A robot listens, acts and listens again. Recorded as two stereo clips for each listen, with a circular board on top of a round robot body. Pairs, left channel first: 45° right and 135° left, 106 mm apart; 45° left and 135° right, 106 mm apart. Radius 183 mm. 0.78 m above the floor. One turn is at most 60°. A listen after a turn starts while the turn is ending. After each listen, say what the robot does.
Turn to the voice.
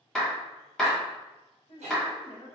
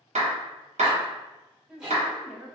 Turn 55° right.
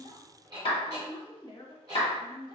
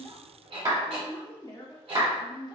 Found it: a woman speaking, straight ahead, 1 to 2 m away.